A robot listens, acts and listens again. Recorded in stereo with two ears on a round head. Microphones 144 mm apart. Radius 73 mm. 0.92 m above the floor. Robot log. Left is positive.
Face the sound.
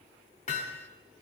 note: The hammering: about 50° left or 130° left.
cmd yaw +50
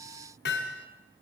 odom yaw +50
note: So it is at 75° left.
cmd yaw +75
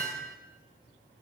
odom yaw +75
note: The hammering is now 10° left.
cmd yaw +10
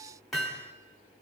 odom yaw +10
end: Found it: hammering, straight ahead, 1 to 2 m away.